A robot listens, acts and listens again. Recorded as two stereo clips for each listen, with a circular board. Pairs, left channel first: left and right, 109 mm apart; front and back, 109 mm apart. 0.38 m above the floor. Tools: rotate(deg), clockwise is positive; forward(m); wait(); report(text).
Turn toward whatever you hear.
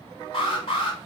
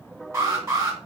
rotate(-120)
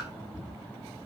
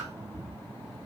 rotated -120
wait()
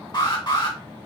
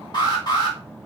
rotate(-45)
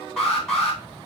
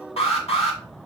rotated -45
report("Found it: an alarm, straight ahead, 2 to 4 m away.")